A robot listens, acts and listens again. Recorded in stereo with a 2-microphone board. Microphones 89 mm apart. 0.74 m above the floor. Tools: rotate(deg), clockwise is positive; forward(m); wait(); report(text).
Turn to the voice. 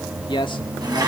rotate(-65)
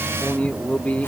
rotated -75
rotate(-15)
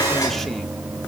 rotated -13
wait()
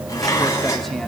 wait()
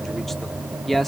report("Found it: a man speaking, straight ahead.")